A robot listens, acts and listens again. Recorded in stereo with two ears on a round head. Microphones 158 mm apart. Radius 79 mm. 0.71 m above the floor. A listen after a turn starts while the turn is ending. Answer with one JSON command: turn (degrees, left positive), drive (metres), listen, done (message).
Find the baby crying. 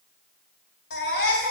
{"turn": 75}
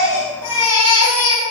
{"turn": 30}
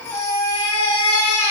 {"turn": 15}
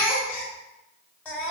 {"done": "Found it: a baby crying, straight ahead, 2 to 4 m away."}